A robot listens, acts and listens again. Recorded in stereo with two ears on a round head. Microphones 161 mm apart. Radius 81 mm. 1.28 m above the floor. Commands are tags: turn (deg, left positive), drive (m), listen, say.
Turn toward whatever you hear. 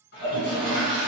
<turn deg="65"/>
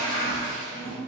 <turn deg="45"/>
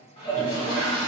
<turn deg="25"/>
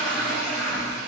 <say>Facing the toilet flushing.</say>